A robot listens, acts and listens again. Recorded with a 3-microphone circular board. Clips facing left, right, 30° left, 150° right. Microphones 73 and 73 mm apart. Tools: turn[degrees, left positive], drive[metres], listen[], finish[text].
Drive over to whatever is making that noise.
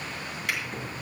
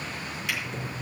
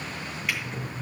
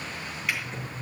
Thought: The drawer: 120° left.
Action: turn[120]
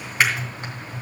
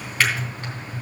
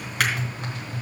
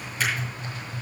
Thought: The drawer is now 20° left.
Action: turn[20]
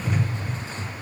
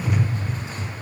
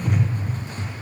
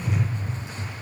Action: drive[1.0]
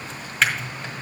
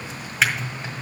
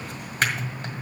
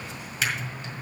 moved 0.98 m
Action: drive[1.0]
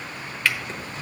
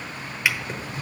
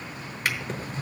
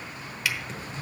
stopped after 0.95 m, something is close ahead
Thought: The drawer is now 15° right.
Action: turn[-15]
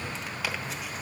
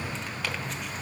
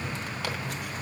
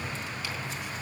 Action: finish[I am next to the drawer.]